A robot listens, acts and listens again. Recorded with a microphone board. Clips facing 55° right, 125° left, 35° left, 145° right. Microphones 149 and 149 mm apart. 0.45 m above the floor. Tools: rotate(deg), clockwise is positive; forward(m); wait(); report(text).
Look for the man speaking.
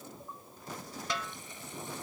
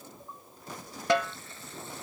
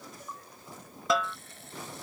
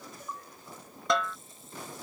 wait()
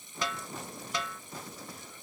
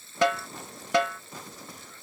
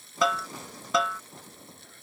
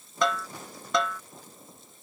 wait()
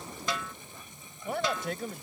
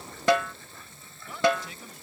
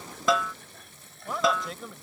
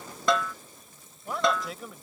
rotate(60)
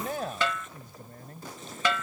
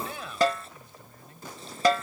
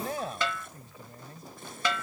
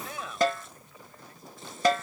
rotate(20)
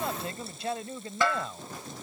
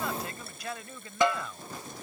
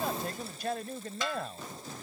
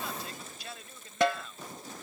report("Found it: a man speaking, straight ahead.")